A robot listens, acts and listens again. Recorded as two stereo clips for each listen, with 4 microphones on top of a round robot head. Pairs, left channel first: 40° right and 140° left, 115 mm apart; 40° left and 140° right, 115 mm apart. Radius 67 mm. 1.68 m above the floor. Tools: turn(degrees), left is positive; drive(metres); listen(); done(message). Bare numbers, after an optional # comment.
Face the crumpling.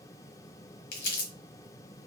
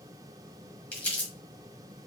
# The crumpling: 35° right.
turn(-35)
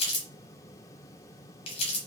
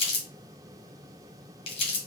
done("Found it: crumpling, straight ahead.")